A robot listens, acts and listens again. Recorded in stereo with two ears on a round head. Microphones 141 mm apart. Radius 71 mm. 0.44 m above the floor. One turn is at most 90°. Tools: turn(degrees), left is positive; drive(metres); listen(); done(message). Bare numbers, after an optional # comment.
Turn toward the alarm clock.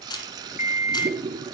# The alarm clock: about 45° left or 135° left.
turn(45)
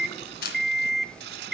done("Found it: an alarm clock, straight ahead, under 1 m away.")